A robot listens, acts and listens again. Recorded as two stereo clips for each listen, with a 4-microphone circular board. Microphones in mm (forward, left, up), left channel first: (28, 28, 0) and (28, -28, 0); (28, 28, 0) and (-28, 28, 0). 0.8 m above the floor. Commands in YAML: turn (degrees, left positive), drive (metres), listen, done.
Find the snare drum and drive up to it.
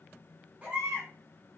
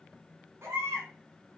listen: true
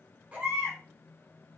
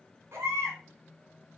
listen: true
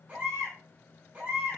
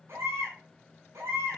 done: "I can't make out a snare drum, only a baby crying."